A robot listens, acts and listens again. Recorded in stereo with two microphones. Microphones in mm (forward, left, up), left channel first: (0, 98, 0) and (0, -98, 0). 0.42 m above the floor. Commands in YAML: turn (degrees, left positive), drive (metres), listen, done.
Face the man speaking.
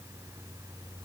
listen: true
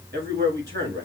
turn: -65
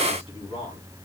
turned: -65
turn: -35
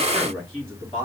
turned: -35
done: "Facing the man speaking, 2 to 4 m away."